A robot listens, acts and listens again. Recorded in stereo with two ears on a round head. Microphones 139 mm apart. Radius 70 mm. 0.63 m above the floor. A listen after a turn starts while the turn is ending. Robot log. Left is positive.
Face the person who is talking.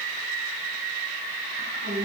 note: The woman speaking: about 60° right or 120° right.
cmd yaw -60
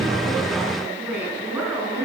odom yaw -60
note: So it is at 15° right.
cmd yaw -15
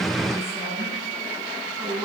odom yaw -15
end: Facing the woman speaking.